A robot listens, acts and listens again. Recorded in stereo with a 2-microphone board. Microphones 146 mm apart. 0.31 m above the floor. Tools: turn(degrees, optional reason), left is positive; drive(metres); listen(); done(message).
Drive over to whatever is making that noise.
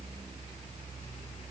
listen()
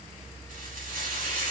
turn(degrees=-75, reason="The frying: about 75° right or 105° right.")
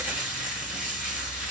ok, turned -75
drive(metres=1.0)
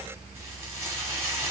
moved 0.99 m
turn(degrees=-20, reason="The frying is now 20° right.")
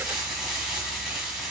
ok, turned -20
drive(metres=1.0)
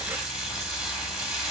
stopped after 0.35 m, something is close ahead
done("Arrived at the frying, straight ahead.")